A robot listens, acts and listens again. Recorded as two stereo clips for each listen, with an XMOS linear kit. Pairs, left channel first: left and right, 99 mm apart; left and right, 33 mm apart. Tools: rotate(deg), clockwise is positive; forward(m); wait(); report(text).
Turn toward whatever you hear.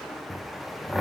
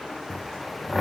rotate(30)
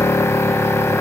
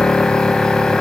rotate(-25)
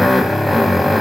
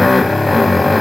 report("Found it: a drill, straight ahead, under 1 m away.")